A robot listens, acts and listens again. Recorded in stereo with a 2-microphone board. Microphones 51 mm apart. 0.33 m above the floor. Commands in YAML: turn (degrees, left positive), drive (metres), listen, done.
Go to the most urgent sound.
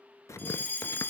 turn: 35
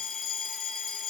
drive: 1.0
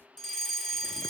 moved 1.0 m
turn: 10
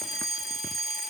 drive: 1.0
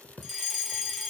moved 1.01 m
drive: 1.0
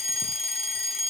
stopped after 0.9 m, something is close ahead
turn: 20
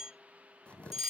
done: "Arrived at the fire alarm, straight ahead."